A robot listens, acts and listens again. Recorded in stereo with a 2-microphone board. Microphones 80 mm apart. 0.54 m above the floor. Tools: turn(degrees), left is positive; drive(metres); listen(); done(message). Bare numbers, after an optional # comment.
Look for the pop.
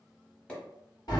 turn(30)
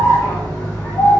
listen()
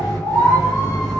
done("I heard a pop, but can't make it out now. It was about 15° right or 135° left.")